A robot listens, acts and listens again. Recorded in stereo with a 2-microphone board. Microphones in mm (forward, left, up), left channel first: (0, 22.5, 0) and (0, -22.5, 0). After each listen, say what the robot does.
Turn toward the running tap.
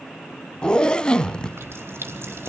Turn 75° right.
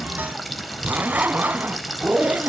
Facing the running tap.